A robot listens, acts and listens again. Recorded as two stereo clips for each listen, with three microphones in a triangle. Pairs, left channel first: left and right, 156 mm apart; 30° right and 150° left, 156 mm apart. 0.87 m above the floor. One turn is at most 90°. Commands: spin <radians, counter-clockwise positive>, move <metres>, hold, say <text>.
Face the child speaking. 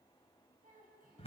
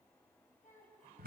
spin -1.05
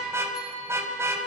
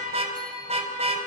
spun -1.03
hold
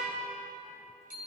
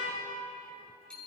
hold
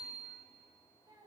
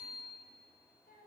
spin -0.52
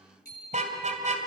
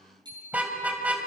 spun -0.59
hold
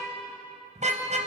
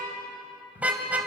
hold
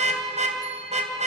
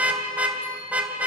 say Facing where the child speaking came from. I can't hear it now.